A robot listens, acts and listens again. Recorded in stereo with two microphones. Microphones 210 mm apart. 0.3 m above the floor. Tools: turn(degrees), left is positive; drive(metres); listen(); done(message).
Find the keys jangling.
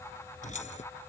turn(degrees=35)
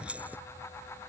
turn(degrees=-10)
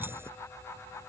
listen()
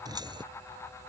turn(degrees=-20)
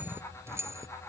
turn(degrees=-15)
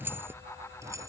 turn(degrees=-15)
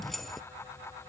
done("Found it: keys jangling, straight ahead.")